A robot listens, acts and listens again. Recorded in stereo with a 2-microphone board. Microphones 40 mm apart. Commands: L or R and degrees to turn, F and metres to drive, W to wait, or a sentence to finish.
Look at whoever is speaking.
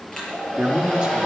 R15
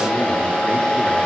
W
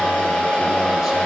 W
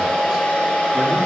I heard a man speaking, but can't make it out now. It was about straight ahead or 150° right.